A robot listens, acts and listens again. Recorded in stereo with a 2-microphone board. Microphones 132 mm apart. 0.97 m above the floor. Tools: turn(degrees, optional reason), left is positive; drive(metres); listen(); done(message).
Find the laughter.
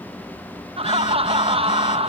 turn(degrees=-45, reason="The laughter: about 45° right or 135° right.")
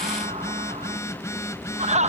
turn(degrees=-80, reason="So it is at 80° right.")
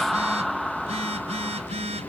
done("Found it: laughter, straight ahead.")